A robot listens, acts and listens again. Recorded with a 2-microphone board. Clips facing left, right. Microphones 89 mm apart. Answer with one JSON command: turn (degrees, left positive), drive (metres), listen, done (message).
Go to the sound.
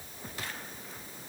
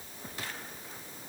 {"listen": true}
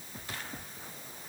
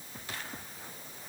{"listen": true}
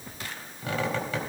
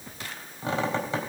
{"turn": -30}
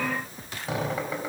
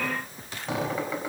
{"drive": 1.0}
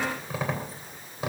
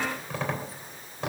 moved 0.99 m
{"drive": 1.0}
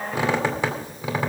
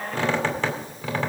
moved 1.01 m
{"turn": 15}
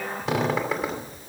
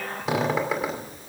{"drive": 1.0}
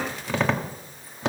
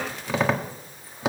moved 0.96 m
{"drive": 1.0}
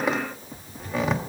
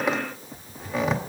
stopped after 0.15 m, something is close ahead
{"done": "Arrived at the squeak, straight ahead."}